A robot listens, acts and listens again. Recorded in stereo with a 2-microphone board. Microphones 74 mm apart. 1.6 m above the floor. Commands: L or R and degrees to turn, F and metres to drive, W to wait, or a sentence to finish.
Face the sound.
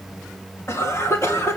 L35
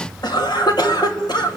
L110
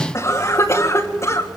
L40
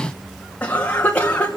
L20
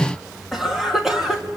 Found it: a cough, straight ahead.